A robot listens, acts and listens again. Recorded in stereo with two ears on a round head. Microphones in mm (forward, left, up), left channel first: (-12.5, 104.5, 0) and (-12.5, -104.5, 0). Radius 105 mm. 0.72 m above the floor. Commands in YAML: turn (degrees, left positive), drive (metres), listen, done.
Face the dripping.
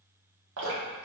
turn: -65
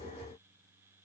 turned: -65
listen: true
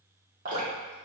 turn: -40
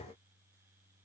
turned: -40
listen: true
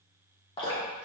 turn: 25
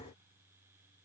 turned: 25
listen: true
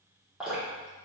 done: "Found it: dripping, straight ahead."